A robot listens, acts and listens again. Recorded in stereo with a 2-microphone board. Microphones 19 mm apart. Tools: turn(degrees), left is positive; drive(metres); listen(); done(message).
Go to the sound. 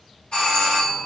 turn(degrees=60)
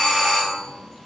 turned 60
turn(degrees=35)
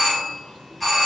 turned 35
drive(metres=1.0)
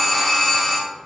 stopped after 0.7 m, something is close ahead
done("Arrived at the doorbell, straight ahead.")